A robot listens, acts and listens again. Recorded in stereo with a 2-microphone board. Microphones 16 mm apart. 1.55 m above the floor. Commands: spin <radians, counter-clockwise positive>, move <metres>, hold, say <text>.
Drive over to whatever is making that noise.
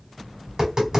spin -0.79
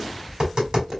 spin -1.48
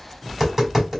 spin -0.35
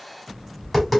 move 1.0
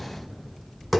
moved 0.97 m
move 1.0
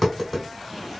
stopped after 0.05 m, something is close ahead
spin -0.17
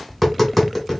say I am next to the tapping.